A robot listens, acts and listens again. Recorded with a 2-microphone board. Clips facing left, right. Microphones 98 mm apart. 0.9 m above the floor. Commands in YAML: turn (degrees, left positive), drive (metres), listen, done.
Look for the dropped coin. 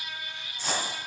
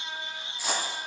turn: -30
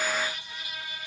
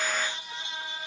listen: true
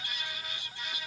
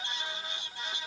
done: "I heard a dropped coin, but can't make it out now. It was about 20° left or 140° right."